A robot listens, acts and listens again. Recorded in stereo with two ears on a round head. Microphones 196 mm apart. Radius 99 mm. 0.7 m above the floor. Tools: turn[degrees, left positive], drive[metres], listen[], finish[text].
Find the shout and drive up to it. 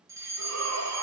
Action: turn[-90]
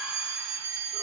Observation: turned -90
Action: listen[]
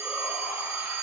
Action: listen[]
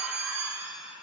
Action: drive[1.0]
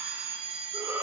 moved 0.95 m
Thought: The shout is now 10° right.
Action: turn[-10]
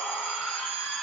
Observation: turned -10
Action: drive[1.0]
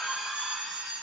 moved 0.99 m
Action: drive[1.0]
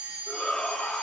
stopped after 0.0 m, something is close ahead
Action: finish[I am next to the shout.]